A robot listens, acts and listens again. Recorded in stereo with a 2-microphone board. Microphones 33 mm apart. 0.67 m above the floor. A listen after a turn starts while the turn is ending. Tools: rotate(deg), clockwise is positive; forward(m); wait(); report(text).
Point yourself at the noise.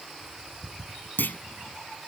rotate(-90)
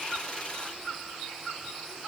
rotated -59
rotate(-30)
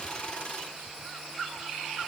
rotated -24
report("Facing where the clunk came from. I can't hear it now.")